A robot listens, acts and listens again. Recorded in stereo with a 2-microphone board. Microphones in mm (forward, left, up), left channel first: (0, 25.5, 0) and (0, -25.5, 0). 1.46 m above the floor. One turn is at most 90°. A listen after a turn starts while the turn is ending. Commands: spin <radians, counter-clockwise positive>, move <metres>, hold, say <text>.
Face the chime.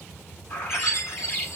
spin 1.22
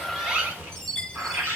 spin 0.17
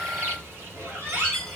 say Facing the chime, 1 to 2 m away.